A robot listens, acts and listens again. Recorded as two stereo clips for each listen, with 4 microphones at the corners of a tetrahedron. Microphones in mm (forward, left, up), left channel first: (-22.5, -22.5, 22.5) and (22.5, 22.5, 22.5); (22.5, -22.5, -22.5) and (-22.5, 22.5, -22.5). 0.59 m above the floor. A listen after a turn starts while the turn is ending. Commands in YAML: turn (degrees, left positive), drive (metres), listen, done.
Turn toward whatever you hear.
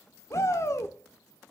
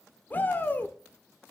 turn: -100
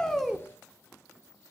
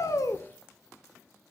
listen: true
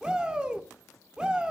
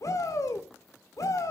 turn: -30
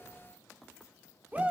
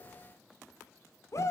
turn: -20
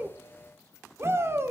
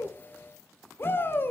done: "Found it: a shout, straight ahead, 1 to 2 m away."